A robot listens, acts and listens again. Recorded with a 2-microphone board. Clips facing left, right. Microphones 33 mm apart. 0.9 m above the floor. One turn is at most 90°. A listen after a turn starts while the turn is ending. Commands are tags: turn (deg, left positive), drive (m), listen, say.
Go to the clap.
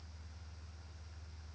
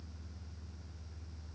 <listen/>
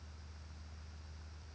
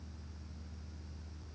<listen/>
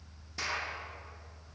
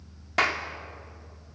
<turn deg="-70"/>
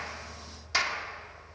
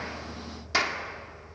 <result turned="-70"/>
<drive m="1.0"/>
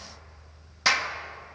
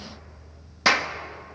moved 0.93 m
<turn deg="-10"/>
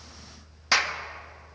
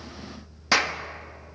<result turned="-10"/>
<drive m="1.0"/>
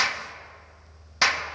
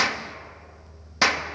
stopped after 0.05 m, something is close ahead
<say>Arrived at the clap, straight ahead.</say>